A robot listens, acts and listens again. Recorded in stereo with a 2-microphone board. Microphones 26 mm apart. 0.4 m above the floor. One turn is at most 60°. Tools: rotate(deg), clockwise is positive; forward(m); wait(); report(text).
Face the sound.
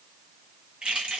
rotate(45)
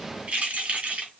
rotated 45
rotate(60)
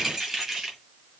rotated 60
rotate(15)
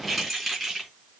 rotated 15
report("Found it: keys jangling, straight ahead.")